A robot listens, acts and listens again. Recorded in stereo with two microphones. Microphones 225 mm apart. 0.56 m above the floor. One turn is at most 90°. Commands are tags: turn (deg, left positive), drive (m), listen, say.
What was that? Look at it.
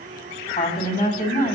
<turn deg="35"/>
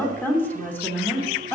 <turn deg="10"/>
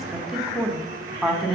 <say>Found it: a woman speaking, straight ahead.</say>